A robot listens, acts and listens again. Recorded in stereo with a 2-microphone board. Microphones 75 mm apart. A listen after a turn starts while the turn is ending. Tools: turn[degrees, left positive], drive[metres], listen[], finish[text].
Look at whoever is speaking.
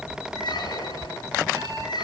Action: listen[]
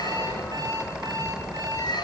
Action: listen[]
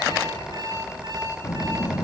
Thought: The child speaking: about 40° left or 140° left.
Action: turn[40]
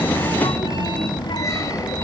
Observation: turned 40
Thought: So it is at 95° left.
Action: turn[95]
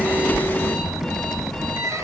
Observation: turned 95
Action: finish[Found it: a child speaking, straight ahead.]